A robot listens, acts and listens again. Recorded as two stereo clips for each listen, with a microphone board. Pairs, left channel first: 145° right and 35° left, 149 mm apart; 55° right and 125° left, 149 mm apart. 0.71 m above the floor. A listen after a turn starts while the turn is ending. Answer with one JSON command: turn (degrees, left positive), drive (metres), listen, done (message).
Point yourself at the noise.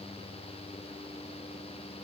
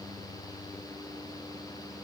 {"listen": true}
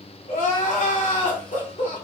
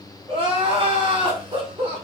{"turn": 180}
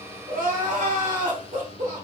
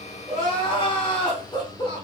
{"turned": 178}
{"done": "Found it: crying, straight ahead."}